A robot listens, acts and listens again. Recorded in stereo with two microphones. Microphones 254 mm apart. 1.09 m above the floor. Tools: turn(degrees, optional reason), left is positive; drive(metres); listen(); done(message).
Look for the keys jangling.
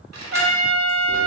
turn(degrees=-90)
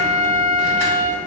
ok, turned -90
listen()
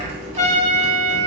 listen()
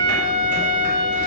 done("Facing where the keys jangling came from. I can't hear it now.")